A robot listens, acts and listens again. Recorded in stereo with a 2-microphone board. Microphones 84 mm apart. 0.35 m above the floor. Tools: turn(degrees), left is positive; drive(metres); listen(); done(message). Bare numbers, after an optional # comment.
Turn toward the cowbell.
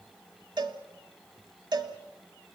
# The cowbell: about 65° right or 115° right.
turn(-65)
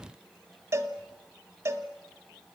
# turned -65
# So it is at 40° right.
turn(-40)
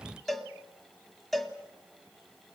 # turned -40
done("Found it: a cowbell, straight ahead, 1 to 2 m away.")